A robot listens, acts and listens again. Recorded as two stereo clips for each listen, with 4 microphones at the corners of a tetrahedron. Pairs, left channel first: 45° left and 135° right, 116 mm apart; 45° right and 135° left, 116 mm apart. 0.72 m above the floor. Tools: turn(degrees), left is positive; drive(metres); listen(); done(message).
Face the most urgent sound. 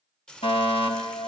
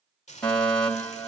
turn(degrees=35)
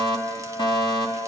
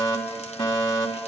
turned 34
done("Found it: a fire alarm, straight ahead, 2 to 4 m away.")